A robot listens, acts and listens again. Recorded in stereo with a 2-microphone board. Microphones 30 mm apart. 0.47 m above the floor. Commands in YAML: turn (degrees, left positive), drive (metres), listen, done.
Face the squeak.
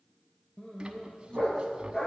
turn: -30
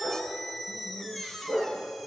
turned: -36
done: "Facing the squeak."